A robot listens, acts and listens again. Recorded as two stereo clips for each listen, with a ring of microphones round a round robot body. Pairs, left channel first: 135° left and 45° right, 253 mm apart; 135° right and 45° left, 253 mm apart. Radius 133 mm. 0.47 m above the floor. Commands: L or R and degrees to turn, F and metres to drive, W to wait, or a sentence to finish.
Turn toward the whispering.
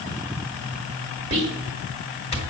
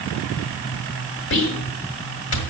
R105
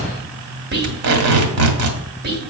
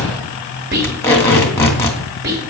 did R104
Found it: whispering, straight ahead, 2 to 4 m away.